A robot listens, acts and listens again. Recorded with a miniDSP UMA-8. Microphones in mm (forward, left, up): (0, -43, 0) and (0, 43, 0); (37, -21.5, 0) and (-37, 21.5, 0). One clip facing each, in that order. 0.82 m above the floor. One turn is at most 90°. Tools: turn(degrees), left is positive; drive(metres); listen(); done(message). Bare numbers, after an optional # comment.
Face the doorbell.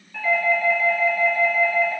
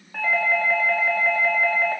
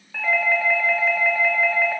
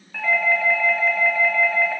# The doorbell: 55° left.
turn(55)
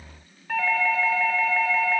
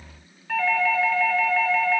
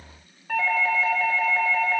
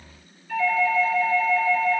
# The doorbell is now 10° right.
turn(-10)
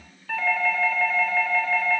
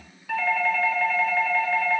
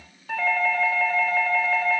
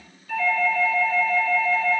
done("Found it: a doorbell, straight ahead.")